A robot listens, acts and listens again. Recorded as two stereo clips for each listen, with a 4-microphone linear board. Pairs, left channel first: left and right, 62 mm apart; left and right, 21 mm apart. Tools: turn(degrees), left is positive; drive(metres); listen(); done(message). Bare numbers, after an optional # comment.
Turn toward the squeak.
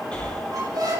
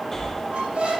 turn(-90)
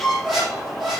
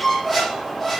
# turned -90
done("Facing the squeak.")